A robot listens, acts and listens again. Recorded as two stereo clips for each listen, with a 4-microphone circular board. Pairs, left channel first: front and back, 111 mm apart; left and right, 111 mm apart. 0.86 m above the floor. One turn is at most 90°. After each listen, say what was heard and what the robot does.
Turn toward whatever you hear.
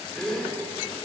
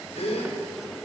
The gasp: 85° left. Turn 85° left.
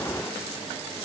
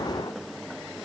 Facing where the gasp came from. I can't hear it now.